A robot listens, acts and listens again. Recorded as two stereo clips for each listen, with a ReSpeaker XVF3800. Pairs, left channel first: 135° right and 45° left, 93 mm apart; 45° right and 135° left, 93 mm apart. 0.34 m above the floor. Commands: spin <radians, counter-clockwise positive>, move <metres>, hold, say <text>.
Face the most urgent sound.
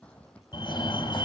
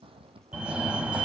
spin -2.62
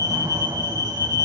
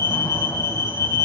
say Facing the fire alarm.